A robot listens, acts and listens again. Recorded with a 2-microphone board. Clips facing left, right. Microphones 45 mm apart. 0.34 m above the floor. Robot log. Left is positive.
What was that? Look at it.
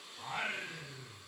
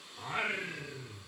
cmd yaw -30
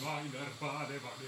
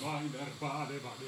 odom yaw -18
note: So it is at 35° left.
cmd yaw +35
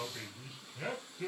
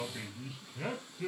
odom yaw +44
end: Facing the singing, 2 to 4 m away.